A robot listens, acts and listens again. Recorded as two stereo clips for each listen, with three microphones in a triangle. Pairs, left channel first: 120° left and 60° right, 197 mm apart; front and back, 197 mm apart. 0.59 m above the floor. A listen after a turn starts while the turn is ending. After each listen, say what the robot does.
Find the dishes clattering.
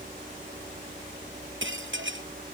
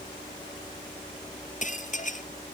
Turn 50° right.
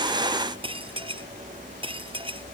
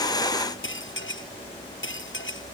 Found it: dishes clattering, straight ahead.